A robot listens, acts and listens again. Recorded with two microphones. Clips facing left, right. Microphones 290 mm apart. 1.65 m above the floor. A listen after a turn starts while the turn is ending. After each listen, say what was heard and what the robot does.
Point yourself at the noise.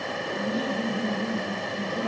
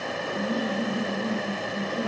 Turn 30° left.
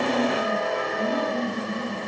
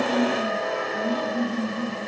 So it is at 145° left. Turn 145° left.
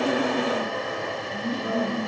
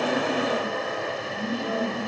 Facing the laughter.